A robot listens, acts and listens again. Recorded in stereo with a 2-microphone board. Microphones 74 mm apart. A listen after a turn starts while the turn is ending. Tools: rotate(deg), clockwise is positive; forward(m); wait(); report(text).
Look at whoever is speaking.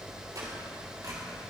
wait()
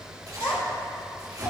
rotate(-65)
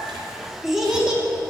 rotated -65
rotate(15)
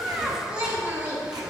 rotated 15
rotate(30)
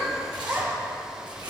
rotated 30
rotate(15)
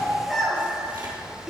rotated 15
report("Found it: a child speaking, straight ahead.")